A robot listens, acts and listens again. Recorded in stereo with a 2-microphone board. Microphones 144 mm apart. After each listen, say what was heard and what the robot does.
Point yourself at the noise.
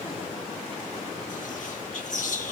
The whispering: about 60° left or 120° left. Turn 60° left.
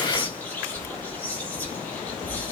So it is at 10° left. Turn 10° left.
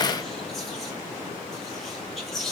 Found it: whispering, straight ahead, 1 to 2 m away.